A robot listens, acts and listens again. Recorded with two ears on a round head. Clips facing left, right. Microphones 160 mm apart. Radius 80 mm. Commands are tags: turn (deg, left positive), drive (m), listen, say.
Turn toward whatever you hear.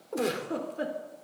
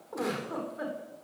<turn deg="35"/>
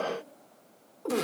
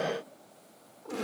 <turn deg="110"/>
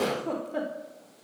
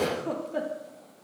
<say>Found it: a giggle, straight ahead.</say>